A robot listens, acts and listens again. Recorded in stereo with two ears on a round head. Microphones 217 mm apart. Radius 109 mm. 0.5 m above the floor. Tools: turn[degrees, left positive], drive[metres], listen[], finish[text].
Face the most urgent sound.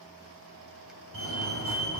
Thought: The fire alarm: about 65° right or 115° right.
Action: turn[-65]
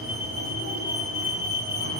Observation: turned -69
Thought: So it is at 40° right.
Action: turn[-40]
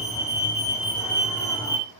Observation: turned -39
Action: finish[Facing the fire alarm.]